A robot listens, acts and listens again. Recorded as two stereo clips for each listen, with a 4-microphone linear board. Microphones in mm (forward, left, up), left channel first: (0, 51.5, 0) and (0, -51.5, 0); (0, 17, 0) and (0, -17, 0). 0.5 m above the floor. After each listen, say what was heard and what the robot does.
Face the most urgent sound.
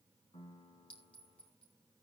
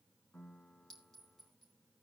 Keep listening.
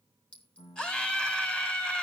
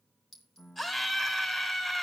Turn 30° left.
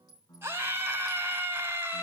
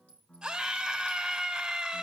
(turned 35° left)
So it is at 25° right. Turn 25° right.
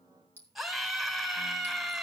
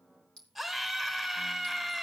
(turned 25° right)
Found it: a scream, straight ahead.